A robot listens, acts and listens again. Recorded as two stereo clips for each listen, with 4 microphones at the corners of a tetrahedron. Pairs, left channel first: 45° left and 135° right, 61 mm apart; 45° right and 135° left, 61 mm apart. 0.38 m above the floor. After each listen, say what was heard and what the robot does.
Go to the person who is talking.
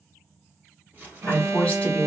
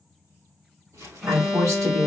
The woman speaking: 115° left. Turn 115° left.
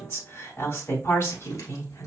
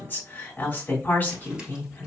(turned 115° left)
The woman speaking is now 10° left. Turn 10° left.
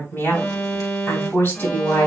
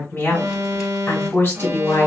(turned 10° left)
Drive 1.0 m forward.
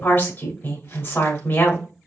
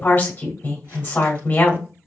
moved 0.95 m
Drive 1.0 m forward.
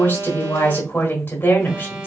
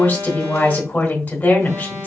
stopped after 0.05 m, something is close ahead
I am next to the woman speaking.